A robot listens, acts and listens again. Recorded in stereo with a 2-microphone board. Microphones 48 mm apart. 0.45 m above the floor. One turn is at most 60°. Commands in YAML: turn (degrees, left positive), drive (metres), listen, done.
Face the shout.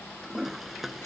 listen: true
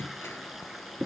listen: true
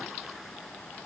done: "I can't make out a shout, only a toilet flushing."